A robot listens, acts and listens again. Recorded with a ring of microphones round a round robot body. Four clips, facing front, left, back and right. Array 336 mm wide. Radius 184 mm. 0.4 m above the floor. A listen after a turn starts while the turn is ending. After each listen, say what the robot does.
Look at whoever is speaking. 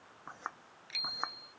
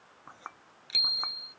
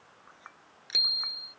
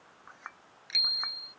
Keep listening.
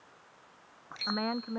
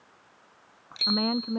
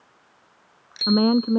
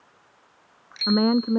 Turn 145° right.
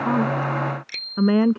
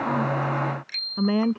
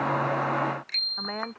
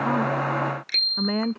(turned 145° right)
Found it: a woman speaking, straight ahead.